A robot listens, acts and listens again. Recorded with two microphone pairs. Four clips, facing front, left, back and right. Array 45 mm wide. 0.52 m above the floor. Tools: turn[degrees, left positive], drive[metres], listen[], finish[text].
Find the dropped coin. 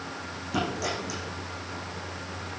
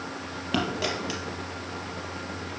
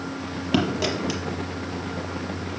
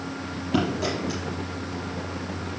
Thought: The dropped coin: 145° left.
Action: turn[145]
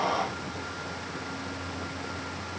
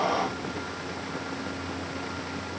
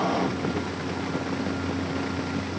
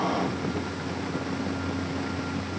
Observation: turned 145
Action: finish[Facing where the dropped coin came from. I can't hear it now.]